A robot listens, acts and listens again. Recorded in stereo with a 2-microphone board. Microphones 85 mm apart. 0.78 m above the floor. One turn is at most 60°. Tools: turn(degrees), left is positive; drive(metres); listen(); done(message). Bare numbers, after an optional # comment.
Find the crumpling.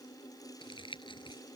# The crumpling: about 75° left or 105° left.
turn(60)
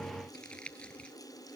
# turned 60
# So it is at 10° left.
turn(10)
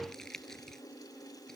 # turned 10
done("Facing the crumpling.")